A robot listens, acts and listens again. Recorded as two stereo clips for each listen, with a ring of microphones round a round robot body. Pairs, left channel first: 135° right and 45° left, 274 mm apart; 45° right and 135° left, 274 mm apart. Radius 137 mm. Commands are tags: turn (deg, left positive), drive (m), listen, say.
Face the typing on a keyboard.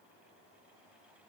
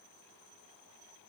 <listen/>
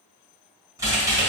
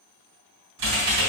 <turn deg="125"/>
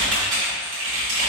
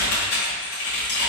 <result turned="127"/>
<say>Facing the typing on a keyboard, 1 to 2 m away.</say>